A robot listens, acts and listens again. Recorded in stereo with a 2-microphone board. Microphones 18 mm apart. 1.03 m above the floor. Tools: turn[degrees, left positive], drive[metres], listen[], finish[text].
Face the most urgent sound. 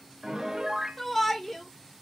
Thought: The shout: about 15° left or 165° left.
Action: turn[15]
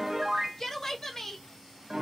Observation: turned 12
Thought: So it is at 155° left.
Action: turn[155]
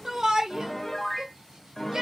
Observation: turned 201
Thought: The shout is now 50° right.
Action: turn[-50]
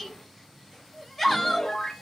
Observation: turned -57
Thought: The shout is now 10° left.
Action: turn[10]
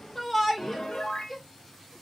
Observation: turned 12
Action: finish[Facing the shout.]